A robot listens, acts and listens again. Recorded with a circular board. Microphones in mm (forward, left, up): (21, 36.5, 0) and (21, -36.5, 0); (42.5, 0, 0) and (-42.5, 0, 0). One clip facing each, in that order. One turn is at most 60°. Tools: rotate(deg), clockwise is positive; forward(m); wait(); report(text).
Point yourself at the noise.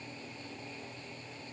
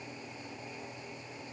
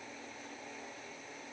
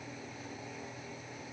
wait()
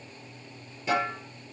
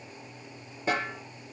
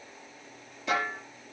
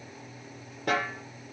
rotate(60)
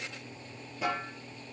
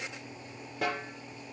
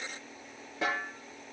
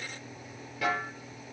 rotate(60)
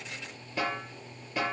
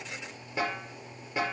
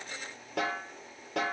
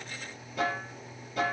rotate(20)
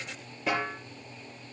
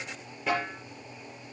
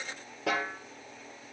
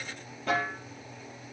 report("Facing the snare drum.")